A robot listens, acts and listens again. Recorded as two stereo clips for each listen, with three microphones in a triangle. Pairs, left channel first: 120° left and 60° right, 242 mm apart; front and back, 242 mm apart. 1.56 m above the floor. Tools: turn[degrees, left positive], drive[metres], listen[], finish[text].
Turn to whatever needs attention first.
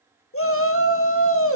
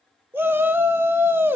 Thought: The shout: 100° left.
Action: turn[100]
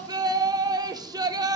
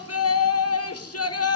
Thought: The shout is now 15° left.
Action: turn[15]
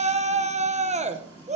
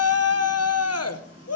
Action: finish[Found it: a shout, straight ahead.]